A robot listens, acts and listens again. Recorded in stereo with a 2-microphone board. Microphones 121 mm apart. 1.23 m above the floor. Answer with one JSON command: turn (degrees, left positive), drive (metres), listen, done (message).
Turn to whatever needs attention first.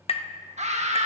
{"turn": -70}
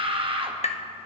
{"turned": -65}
{"turn": -45}
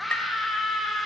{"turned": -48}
{"done": "Facing the scream."}